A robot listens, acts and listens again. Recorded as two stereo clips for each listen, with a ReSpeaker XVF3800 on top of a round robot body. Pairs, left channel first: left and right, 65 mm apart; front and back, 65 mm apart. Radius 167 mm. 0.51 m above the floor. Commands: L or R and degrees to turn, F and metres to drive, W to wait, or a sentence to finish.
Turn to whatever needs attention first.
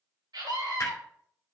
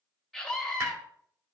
R90
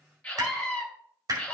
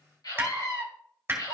L15
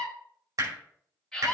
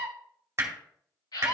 Facing the scream.